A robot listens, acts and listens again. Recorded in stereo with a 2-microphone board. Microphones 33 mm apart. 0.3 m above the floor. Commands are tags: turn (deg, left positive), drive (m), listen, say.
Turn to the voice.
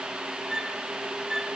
<listen/>
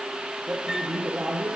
<turn deg="-45"/>
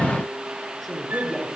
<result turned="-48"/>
<say>Found it: a man speaking, straight ahead.</say>